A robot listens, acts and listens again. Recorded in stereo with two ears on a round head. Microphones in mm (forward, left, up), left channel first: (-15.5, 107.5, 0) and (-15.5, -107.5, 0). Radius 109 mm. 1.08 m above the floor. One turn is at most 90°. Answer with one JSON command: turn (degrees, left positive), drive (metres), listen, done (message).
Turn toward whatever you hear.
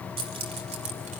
{"turn": -30}
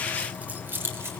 {"turn": -10}
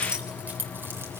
{"done": "Facing the keys jangling, 2 to 4 m away."}